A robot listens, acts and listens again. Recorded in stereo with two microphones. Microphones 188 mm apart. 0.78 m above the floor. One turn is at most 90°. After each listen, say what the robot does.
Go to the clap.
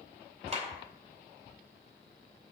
Turn 35° right.
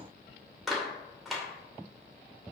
Drive 1.0 m forward.
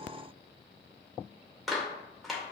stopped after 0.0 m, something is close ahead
Blocked. The clap is further on, straight ahead.